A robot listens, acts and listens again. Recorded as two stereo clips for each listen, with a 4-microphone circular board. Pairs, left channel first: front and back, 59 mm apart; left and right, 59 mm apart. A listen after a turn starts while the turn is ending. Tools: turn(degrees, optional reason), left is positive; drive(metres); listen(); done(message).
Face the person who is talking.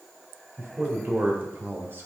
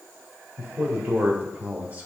turn(degrees=-140, reason="The man speaking: 140° right.")
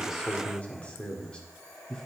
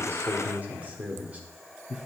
turn(degrees=-55, reason="The man speaking is now 55° right.")
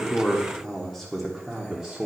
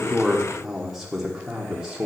turn(degrees=-140, reason="The man speaking is now 140° right.")
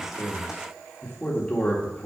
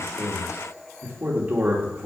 turn(degrees=-55, reason="The man speaking is now 55° right.")
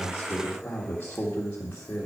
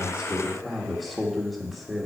done("Found it: a man speaking, straight ahead, 1 to 2 m away.")